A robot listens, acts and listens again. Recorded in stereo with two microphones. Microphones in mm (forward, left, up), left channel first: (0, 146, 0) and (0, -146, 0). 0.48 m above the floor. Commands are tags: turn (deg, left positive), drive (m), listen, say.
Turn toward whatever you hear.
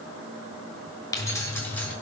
<turn deg="30"/>
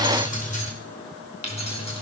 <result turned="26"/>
<turn deg="20"/>
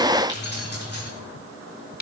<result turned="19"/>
<turn deg="150"/>
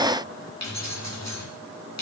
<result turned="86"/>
<turn deg="65"/>
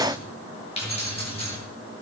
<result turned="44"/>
<turn deg="20"/>
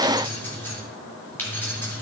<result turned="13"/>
<say>Found it: keys jangling, straight ahead, over 4 m away.</say>